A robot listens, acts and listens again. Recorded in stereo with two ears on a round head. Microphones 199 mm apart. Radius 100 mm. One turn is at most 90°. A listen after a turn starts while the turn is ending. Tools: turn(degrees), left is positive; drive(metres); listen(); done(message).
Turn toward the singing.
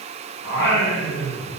turn(degrees=40)
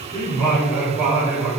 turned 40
turn(degrees=-15)
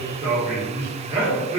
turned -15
turn(degrees=-25)
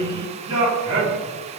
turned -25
turn(degrees=-25)
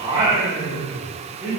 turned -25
turn(degrees=-15)
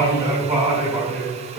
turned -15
done("Found it: singing, straight ahead, 1 to 2 m away.")